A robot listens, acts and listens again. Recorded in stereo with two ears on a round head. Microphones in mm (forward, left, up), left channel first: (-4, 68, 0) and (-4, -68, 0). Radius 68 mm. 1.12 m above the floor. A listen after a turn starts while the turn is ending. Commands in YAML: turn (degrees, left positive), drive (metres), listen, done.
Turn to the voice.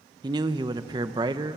turn: -30
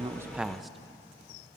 listen: true
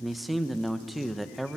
done: "Found it: a man speaking, straight ahead, under 1 m away."